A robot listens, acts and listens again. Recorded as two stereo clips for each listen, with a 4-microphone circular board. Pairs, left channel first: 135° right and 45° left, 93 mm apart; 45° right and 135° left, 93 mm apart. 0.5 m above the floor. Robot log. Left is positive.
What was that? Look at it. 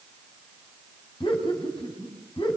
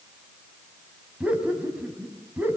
note: The laughter: 155° right.
cmd yaw -155
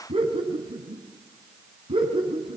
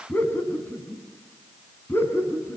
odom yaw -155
note: The laughter is now 20° left.
cmd yaw +20
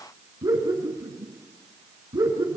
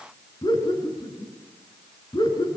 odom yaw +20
end: Facing the laughter, over 4 m away.